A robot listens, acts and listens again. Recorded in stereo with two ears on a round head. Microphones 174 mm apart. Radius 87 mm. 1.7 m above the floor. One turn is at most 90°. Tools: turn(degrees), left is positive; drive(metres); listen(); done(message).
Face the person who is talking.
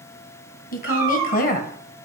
turn(degrees=45)
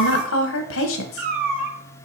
turn(degrees=90)
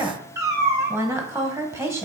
turn(degrees=-15)
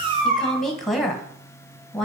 done("Found it: a woman speaking, straight ahead, 1 to 2 m away.")